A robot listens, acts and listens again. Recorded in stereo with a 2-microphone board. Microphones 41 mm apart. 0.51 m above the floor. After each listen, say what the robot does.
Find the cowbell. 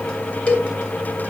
Turn 30° left.
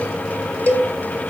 Turn 115° left.
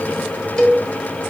Turn 20° left.
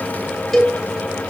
Found it: a cowbell, straight ahead, 2 to 4 m away.